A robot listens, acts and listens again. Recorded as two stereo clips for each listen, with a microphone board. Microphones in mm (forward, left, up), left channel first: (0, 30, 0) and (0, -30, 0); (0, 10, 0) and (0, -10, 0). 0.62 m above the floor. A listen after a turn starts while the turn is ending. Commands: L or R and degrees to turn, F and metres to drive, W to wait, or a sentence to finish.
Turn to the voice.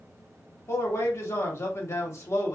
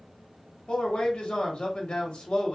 L45
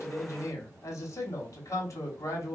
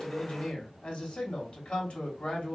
L85
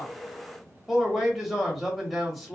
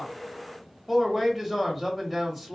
Found it: a man speaking, straight ahead, 1 to 2 m away.